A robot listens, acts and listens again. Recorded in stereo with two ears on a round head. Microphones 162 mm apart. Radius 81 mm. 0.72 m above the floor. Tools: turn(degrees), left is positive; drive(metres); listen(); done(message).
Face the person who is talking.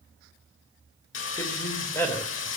turn(degrees=30)
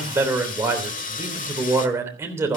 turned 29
turn(degrees=-15)
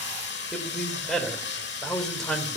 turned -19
done("Found it: a man speaking, straight ahead.")